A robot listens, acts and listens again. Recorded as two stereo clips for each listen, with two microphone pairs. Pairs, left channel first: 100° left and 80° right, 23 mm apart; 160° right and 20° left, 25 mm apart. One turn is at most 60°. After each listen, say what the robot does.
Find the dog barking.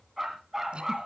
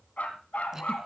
Turn 60° right.
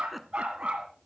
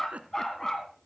Turn 60° right.
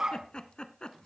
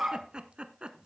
Turn 40° right.
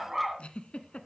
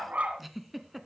Found it: a dog barking, straight ahead.